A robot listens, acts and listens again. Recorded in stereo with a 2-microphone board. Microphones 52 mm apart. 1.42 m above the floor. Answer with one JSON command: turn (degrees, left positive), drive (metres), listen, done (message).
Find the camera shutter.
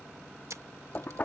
{"turn": -70}
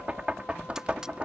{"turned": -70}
{"listen": true}
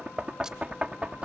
{"listen": true}
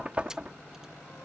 {"done": "I heard a camera shutter, but can't make it out now. It was about straight ahead or 40° right."}